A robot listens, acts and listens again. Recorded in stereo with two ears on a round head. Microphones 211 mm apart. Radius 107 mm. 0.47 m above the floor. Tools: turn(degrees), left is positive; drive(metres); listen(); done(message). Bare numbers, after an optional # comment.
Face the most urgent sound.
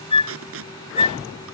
listen()
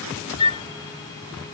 listen()
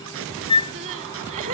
# The crying: about 30° right or 150° right.
turn(-30)
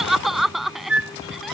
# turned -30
done("Facing the crying.")